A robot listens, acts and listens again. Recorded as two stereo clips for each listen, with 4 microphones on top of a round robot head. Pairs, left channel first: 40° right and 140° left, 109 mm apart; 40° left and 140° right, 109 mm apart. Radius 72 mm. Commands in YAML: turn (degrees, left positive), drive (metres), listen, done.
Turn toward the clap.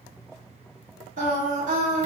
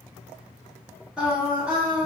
listen: true
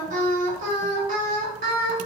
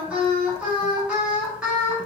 listen: true
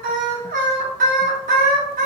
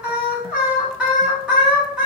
done: "I can't make out a clap, only singing."